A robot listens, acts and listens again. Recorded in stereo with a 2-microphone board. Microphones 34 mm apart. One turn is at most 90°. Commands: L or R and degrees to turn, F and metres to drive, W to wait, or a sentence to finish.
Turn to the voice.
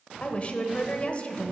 L35
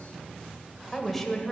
Found it: a woman speaking, straight ahead.